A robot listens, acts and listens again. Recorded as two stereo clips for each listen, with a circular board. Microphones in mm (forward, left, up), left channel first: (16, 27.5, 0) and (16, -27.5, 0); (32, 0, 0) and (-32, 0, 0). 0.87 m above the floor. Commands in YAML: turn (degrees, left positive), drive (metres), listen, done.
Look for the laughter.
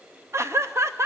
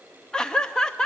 turn: -75
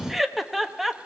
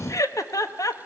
done: "Facing the laughter."